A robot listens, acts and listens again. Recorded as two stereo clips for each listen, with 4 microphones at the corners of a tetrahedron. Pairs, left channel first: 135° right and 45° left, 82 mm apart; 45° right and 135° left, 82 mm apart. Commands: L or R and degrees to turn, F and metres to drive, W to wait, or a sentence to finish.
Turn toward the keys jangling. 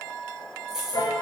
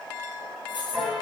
R40
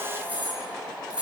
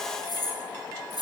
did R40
R30
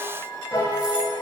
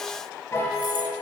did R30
W
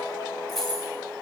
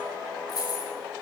R55
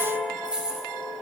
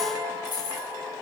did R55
R35
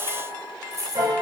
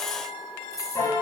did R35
Found it: keys jangling, straight ahead.